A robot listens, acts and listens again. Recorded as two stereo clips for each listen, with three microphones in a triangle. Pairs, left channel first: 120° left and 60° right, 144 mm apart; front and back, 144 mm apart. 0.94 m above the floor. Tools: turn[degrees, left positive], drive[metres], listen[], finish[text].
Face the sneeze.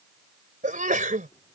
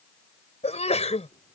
Thought: The sneeze: 40° right.
Action: turn[-40]
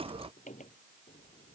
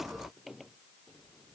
Action: finish[I heard a sneeze from this way, but can't make it out now.]